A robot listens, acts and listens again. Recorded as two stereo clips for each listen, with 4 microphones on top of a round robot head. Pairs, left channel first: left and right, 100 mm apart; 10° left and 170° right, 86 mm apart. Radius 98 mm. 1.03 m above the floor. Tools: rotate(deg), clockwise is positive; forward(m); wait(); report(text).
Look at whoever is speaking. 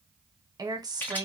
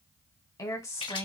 rotate(45)
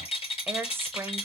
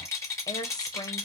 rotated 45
rotate(30)
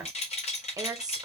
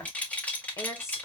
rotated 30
rotate(45)
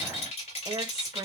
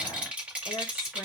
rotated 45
rotate(40)
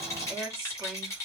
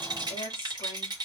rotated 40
rotate(10)
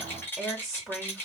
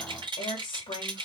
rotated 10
report("Facing the woman speaking, 1 to 2 m away.")